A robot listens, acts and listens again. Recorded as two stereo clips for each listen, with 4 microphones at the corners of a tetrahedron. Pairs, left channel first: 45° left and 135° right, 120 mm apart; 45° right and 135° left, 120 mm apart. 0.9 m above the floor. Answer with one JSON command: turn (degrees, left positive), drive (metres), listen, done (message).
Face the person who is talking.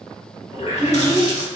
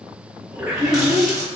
{"turn": -60}
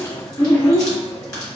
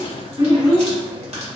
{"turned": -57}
{"done": "Found it: a child speaking, straight ahead, 1 to 2 m away."}